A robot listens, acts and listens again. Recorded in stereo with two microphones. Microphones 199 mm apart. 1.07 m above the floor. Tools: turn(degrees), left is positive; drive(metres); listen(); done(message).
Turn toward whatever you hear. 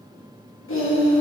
turn(degrees=65)
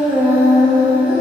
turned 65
turn(degrees=-25)
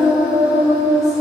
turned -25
turn(degrees=-15)
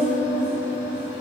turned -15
turn(degrees=-15)
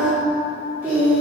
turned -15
turn(degrees=-10)
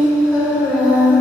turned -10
done("Found it: singing, straight ahead, 2 to 4 m away.")